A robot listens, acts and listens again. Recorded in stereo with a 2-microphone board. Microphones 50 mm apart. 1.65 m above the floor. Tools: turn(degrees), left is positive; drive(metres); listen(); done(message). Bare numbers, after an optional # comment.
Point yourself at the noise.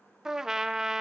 turn(-30)
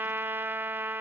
# So it is at 135° right.
turn(-135)
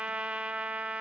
# The trumpet is now 20° right.
turn(-20)
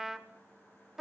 done("Found it: a trumpet, straight ahead.")